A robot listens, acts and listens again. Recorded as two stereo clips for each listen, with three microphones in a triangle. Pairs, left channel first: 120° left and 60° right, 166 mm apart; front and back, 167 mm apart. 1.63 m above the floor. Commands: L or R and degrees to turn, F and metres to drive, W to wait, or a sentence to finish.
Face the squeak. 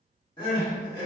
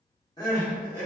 W
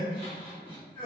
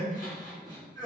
W
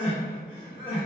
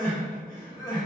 I can't make out a squeak to turn to.